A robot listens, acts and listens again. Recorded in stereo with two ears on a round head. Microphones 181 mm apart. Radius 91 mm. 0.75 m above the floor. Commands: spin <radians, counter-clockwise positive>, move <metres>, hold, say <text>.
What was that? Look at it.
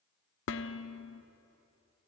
spin 1.13
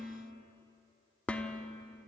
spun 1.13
say Found it: dishes clattering, straight ahead, 1 to 2 m away.